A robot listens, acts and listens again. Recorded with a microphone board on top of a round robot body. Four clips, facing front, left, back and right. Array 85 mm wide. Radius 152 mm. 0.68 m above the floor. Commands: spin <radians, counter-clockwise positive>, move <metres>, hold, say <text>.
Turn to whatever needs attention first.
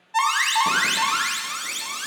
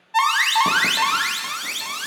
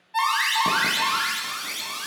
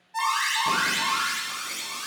spin 1.22
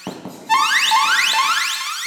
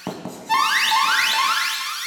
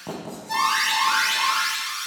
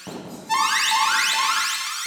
spin 0.26
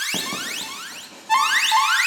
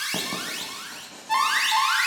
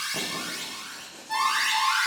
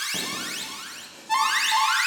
say Found it: an alarm, straight ahead, 1 to 2 m away.